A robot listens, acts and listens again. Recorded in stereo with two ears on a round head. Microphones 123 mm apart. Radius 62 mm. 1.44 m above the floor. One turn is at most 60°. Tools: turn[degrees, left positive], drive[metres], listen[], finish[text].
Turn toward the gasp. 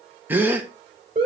Action: turn[-30]
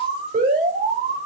Action: listen[]
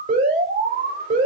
Action: finish[I heard a gasp, but can't make it out now. It was about 15° left or 135° right.]